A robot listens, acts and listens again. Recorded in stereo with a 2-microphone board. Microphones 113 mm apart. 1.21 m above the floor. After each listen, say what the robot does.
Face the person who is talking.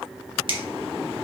Keep listening.
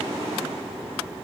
Keep listening.
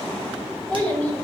Turn 15° left.
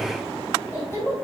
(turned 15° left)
Turn 25° left.
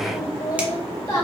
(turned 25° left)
Turn 145° left.
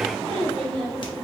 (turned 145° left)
Found it: a child speaking, straight ahead, 2 to 4 m away.